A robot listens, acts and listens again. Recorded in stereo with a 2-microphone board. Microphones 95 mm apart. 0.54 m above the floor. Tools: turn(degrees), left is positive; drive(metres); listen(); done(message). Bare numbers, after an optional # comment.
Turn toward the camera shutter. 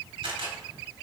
# The camera shutter: about 70° right or 110° right.
turn(-70)
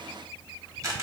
# So it is at 35° right.
turn(-35)
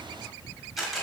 done("Facing the camera shutter, 1 to 2 m away.")